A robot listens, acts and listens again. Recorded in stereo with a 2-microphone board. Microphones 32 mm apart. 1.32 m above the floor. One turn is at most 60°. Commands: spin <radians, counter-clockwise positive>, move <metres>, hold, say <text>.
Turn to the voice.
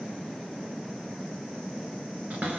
hold
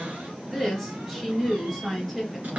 spin 0.52
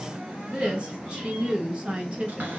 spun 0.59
spin -0.52
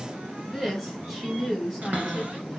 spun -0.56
say Facing the woman speaking, 1 to 2 m away.